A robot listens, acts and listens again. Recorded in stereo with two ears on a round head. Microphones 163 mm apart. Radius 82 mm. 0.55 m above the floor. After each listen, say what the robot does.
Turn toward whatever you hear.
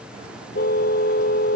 Turn 55° left.
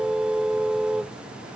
Found it: a car horn, straight ahead.